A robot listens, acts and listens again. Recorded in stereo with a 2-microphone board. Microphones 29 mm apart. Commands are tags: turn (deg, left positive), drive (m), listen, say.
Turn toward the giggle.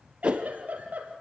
<turn deg="-65"/>
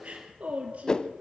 <turn deg="-50"/>
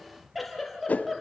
<say>Found it: a giggle, straight ahead.</say>